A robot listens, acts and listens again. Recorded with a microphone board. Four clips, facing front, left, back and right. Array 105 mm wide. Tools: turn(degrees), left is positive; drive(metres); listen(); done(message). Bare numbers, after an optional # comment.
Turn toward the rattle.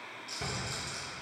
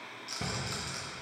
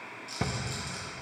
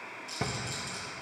# The rattle: 95° left.
turn(95)
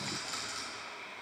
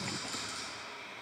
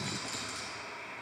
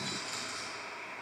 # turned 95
done("Found it: a rattle, straight ahead, 2 to 4 m away.")